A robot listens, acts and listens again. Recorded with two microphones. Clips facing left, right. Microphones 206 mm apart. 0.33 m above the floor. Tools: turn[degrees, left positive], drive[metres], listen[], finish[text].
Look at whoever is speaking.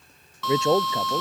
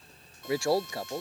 Thought: The man speaking: about 20° left or 160° left.
Action: turn[20]
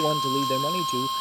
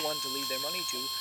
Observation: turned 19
Action: listen[]
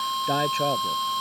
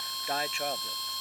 Action: listen[]
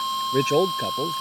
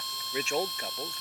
Thought: So it is at 140° left.
Action: turn[140]
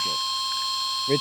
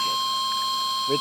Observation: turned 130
Action: finish[Facing the man speaking.]